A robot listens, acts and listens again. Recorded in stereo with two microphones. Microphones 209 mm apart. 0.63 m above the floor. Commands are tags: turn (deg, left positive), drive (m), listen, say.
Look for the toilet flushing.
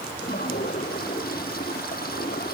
<turn deg="50"/>
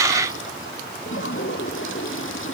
<turn deg="85"/>
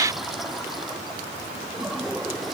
<say>Found it: a toilet flushing, straight ahead.</say>